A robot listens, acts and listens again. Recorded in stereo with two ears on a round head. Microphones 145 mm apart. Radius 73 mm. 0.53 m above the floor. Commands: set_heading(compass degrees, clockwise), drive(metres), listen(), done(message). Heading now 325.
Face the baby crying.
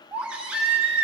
set_heading(355)
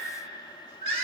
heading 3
set_heading(138)
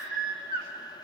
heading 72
set_heading(137)
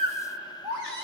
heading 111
set_heading(136)
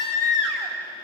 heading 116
set_heading(141)
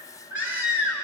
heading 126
set_heading(141)
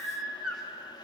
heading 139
done("Facing the baby crying.")